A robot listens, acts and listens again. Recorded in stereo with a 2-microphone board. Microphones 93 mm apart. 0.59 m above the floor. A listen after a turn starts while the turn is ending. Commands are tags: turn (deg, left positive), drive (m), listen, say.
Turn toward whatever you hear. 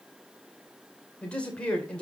<turn deg="30"/>
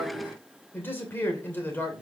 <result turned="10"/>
<turn deg="20"/>
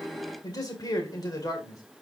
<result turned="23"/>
<turn deg="135"/>
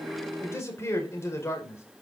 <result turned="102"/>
<turn deg="30"/>
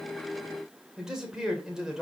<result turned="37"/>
<say>Found it: a man speaking, straight ahead.</say>